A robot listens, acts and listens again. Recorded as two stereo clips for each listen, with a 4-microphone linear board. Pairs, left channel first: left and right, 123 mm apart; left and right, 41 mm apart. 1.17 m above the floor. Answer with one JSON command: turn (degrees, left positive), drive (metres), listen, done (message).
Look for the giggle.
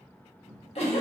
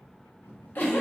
{"turn": 55}
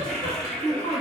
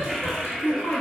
{"turn": 70}
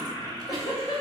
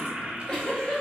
{"turn": 30}
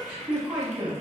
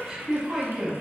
{"turn": -10}
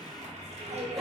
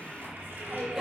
{"listen": true}
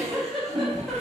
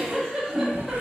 {"done": "Facing the giggle, 1 to 2 m away."}